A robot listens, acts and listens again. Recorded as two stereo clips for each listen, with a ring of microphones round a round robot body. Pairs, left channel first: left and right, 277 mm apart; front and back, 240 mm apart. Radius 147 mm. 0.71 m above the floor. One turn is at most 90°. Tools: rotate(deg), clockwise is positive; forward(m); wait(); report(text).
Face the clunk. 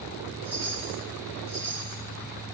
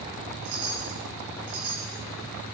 wait()
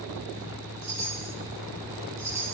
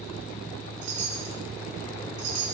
wait()
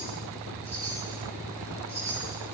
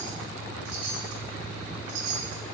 report("I can't make out a clunk, only a chime.")